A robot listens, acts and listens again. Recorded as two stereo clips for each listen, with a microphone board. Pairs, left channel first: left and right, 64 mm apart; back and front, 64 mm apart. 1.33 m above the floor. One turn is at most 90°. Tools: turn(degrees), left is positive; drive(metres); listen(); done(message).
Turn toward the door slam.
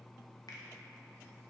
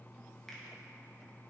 listen()
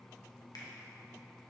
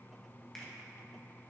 listen()
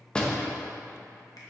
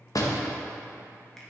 turn(degrees=90)
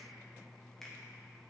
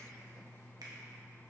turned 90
turn(degrees=75)
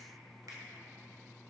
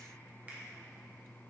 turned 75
done("Facing where the door slam came from. I can't hear it now.")